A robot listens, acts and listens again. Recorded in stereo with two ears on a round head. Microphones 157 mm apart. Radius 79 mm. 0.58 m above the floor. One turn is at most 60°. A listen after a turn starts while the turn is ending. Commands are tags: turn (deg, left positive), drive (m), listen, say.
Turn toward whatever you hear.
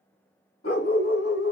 <turn deg="60"/>
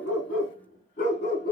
<turn deg="60"/>
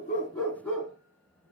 <say>Facing the dog barking, 2 to 4 m away.</say>